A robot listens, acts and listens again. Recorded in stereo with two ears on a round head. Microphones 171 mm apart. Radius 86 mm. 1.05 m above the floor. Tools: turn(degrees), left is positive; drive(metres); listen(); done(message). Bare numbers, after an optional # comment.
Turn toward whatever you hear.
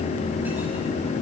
listen()
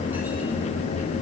listen()
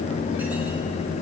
done("I can't make out anything to turn to.")